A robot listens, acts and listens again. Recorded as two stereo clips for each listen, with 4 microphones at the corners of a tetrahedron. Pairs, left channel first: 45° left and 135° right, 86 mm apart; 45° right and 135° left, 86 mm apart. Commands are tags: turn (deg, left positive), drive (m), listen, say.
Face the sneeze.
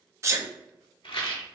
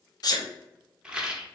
<turn deg="-80"/>
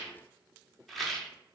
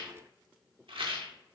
<say>Facing where the sneeze came from. I can't hear it now.</say>